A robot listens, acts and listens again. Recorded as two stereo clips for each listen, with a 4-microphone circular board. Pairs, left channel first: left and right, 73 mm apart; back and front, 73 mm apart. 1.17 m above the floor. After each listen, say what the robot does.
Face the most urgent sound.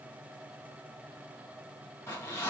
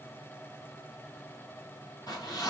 Keep listening.
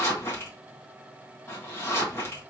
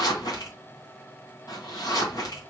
Keep listening.
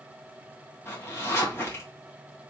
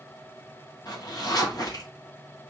I can't make out anything urgent to turn to.